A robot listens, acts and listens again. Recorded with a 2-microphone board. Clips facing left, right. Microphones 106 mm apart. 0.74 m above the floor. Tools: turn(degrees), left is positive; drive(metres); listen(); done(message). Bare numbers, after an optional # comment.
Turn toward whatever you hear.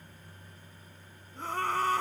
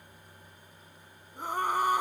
turn(-30)
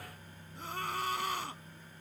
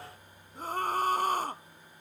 # So it is at 135° right.
turn(-135)
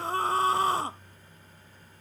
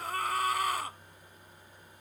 # The scream is now 30° left.
turn(30)
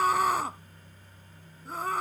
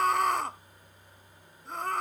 done("Found it: a scream, straight ahead.")